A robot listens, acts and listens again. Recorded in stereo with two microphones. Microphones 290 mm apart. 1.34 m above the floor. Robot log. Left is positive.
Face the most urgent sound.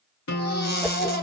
note: The baby crying: about 35° left or 145° left.
cmd yaw +35
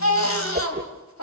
note: So it is at 110° left.
cmd yaw +110
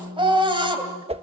note: The baby crying is now 20° right.
cmd yaw -20
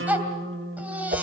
end: Facing the baby crying.